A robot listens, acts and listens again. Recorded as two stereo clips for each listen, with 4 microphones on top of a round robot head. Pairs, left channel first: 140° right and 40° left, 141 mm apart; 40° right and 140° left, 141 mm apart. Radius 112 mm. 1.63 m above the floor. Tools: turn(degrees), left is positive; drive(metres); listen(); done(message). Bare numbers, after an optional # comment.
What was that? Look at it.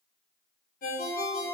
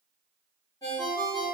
# The ringtone: 110° right.
turn(-110)
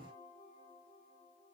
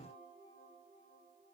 listen()
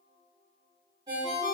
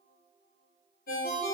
# The ringtone is now 20° right.
turn(-20)
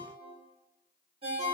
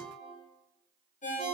done("Facing the ringtone, 1 to 2 m away.")